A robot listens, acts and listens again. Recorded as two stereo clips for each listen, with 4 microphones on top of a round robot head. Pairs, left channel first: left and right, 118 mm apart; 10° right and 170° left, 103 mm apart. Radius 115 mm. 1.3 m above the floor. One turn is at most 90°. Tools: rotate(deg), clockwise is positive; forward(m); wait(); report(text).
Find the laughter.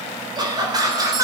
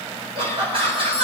rotate(90)
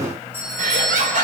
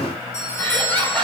rotate(90)
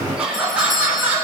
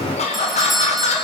rotate(15)
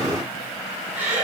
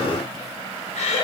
rotate(15)
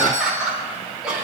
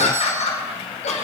report("Found it: laughter, straight ahead, 2 to 4 m away.")